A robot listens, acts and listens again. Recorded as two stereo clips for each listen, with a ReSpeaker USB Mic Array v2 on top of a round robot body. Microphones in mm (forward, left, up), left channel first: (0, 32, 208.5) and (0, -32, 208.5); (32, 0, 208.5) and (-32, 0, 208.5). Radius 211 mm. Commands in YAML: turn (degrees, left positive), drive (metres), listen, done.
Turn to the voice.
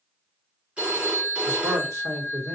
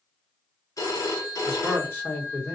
turn: -60
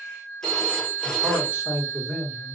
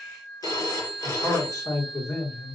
turn: -30
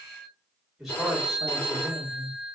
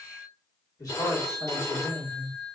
done: "Facing the man speaking."